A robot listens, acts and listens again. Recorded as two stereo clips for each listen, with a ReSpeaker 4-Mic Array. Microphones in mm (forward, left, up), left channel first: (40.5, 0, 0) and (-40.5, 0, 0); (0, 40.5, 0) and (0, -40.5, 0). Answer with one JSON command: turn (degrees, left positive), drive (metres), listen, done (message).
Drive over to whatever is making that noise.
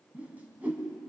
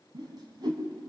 {"turn": -110}
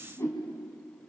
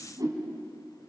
{"turn": -50}
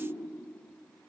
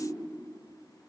{"listen": true}
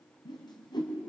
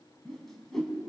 {"drive": 1.0}
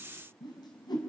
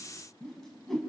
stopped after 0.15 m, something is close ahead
{"done": "Blocked. The whoosh is further on, straight ahead."}